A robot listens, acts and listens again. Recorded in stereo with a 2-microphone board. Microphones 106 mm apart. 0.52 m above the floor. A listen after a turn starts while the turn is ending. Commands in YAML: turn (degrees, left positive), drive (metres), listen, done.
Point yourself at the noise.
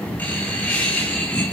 turn: 30
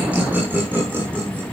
turn: -20
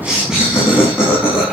turn: -10
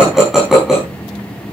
done: "Facing the laughter, over 4 m away."